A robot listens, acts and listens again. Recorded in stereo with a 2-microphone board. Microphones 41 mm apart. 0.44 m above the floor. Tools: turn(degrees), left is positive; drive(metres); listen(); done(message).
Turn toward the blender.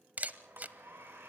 turn(degrees=-70)
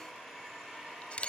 done("Found it: a blender, straight ahead, over 4 m away.")